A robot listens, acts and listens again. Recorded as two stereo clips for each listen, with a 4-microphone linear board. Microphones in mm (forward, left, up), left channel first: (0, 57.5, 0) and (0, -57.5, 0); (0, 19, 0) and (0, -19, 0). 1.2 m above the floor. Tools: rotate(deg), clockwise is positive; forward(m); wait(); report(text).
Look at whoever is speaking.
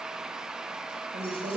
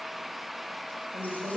rotate(90)
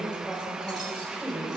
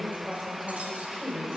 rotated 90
report("Found it: a woman speaking, straight ahead, over 4 m away.")